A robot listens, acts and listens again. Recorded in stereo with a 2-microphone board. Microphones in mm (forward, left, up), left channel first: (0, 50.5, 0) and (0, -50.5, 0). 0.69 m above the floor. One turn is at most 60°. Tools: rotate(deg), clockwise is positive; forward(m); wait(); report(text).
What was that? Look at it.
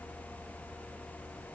wait()
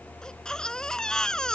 rotate(-30)
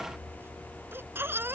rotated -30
rotate(25)
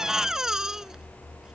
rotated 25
report("Found it: a baby crying, straight ahead.")